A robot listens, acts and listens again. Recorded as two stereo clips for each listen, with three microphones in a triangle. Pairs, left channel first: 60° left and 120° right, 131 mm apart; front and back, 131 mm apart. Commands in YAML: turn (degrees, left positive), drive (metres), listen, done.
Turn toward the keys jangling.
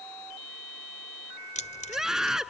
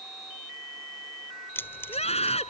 turn: 75
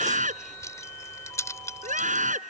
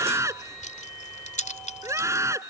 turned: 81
done: "Found it: keys jangling, straight ahead."